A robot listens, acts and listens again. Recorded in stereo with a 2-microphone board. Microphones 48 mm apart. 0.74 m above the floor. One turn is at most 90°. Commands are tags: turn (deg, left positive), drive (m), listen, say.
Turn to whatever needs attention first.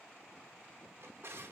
<listen/>
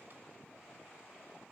<listen/>
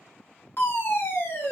<turn deg="50"/>
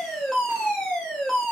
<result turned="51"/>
<say>Facing the fire alarm.</say>